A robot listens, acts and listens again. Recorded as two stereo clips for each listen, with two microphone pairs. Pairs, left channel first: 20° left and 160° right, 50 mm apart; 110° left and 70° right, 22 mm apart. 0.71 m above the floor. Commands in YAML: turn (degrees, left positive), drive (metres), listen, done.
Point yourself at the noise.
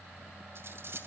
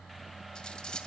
turn: 160
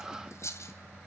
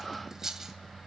done: "Facing the cutlery clinking, 2 to 4 m away."